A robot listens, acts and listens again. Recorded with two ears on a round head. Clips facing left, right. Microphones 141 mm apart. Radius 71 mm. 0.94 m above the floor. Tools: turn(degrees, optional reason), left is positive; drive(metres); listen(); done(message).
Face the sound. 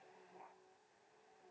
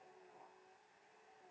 listen()
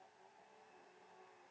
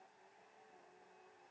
listen()
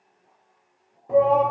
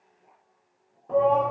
turn(degrees=30)
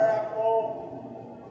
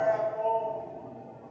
turn(degrees=140, reason="So it is at 140° left.")
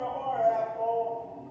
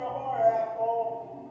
done("Facing the shout, under 1 m away.")